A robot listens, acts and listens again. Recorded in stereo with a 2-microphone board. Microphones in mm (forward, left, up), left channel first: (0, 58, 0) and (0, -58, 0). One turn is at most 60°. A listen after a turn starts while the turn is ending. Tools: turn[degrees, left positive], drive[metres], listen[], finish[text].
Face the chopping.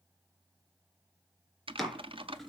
Action: turn[30]
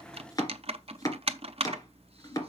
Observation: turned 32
Thought: So it is at 150° left.
Action: turn[60]
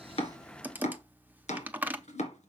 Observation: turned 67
Thought: The chopping is now 80° left.
Action: turn[60]
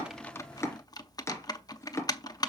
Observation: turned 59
Thought: The chopping is now 25° left.
Action: turn[25]
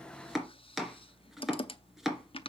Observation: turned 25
Action: finish[Facing the chopping.]